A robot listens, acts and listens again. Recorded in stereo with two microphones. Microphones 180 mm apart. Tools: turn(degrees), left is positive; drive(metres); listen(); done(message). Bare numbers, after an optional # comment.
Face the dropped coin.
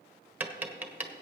listen()
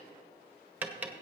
listen()
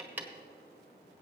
done("I can't make out a dropped coin, only tapping.")